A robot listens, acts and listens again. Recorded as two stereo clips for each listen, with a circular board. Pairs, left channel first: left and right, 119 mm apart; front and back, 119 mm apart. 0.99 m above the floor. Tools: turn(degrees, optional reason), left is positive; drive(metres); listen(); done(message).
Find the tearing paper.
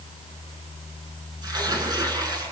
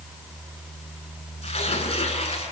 turn(degrees=-35, reason="The tearing paper: 35° right.")
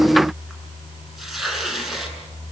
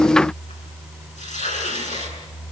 done("Facing the tearing paper, over 4 m away.")